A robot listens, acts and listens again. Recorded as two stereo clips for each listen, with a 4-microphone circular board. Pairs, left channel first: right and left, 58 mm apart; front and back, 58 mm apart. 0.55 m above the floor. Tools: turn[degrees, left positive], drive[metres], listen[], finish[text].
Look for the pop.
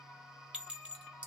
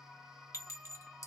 Action: listen[]
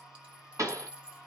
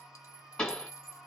Thought: The pop: 75° left.
Action: turn[75]
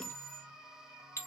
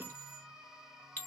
Action: finish[I heard a pop from this way, but can't make it out now.]